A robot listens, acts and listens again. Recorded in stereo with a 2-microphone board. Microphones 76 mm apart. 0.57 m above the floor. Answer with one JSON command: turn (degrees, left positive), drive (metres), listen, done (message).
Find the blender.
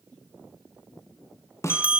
{"listen": true}
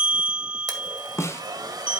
{"turn": -55}
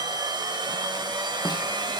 {"turn": -70}
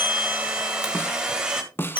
{"turn": -10}
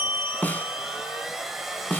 {"done": "Facing the blender."}